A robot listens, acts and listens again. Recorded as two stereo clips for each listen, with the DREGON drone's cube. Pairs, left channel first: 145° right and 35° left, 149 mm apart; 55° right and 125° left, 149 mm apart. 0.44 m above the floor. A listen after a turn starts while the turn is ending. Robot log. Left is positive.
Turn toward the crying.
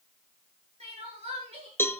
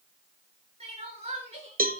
note: The crying: 80° left.
cmd yaw +80
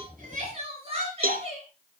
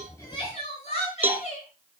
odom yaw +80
note: The crying is now 15° right.
cmd yaw -15
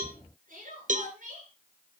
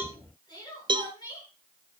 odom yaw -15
end: Facing the crying.